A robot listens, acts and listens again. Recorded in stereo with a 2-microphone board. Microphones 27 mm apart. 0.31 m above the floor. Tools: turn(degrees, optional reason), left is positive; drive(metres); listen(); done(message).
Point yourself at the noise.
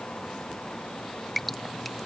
turn(degrees=30)
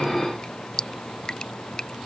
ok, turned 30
turn(degrees=150, reason="So it is at 150° left.")
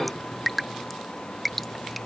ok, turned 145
done("Found it: dripping, straight ahead.")